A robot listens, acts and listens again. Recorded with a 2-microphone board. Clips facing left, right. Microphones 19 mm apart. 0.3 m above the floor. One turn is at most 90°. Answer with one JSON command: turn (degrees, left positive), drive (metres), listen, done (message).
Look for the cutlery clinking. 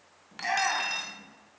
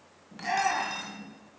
{"turn": 25}
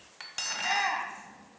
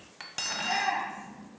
{"done": "Facing the cutlery clinking."}